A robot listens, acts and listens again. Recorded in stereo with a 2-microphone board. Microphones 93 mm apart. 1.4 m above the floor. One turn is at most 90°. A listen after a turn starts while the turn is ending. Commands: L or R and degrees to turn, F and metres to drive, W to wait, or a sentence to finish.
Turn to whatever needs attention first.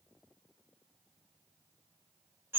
W
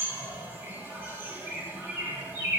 W
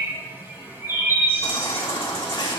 L60
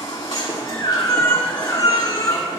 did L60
L55
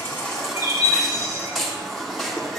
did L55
Facing the baby crying, 2 to 4 m away.